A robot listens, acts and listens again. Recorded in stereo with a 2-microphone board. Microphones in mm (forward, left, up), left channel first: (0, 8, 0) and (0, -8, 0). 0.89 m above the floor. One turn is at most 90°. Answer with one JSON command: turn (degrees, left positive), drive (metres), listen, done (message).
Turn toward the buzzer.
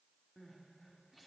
{"listen": true}
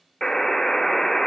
{"turn": 25}
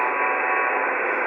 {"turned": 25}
{"done": "Facing the buzzer, 1 to 2 m away."}